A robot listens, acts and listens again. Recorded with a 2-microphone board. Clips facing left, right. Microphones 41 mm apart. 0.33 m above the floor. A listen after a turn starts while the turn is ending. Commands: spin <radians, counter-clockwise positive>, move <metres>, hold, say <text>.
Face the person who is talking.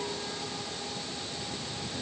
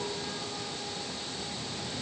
hold
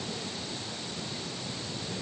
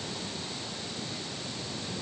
hold
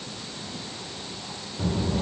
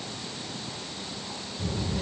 spin 0.96
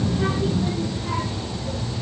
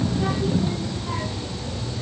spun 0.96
say Found it: a child speaking, straight ahead, over 4 m away.